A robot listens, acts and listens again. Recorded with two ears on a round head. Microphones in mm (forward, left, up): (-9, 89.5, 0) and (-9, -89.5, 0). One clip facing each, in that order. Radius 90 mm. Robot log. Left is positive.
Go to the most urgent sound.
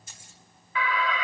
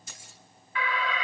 note: The alarm: about 70° left or 110° left.
cmd yaw +70
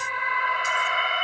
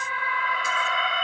cmd fwd 1.0
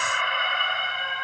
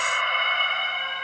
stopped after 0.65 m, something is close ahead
end: Something is in my way. I am facing the alarm but have not reached it.